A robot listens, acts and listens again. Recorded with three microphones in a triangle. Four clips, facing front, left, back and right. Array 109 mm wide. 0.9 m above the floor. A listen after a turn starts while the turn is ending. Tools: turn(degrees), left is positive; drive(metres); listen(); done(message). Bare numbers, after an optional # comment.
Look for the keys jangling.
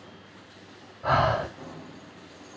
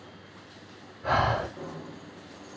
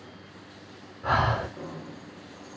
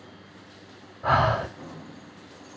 # The keys jangling: 150° left.
turn(150)
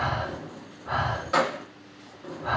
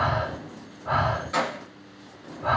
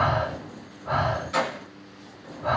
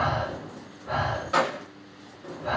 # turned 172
# The keys jangling is now 20° right.
turn(-20)
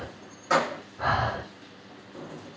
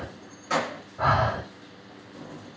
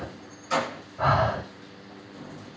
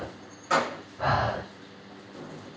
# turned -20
done("Facing the keys jangling, under 1 m away.")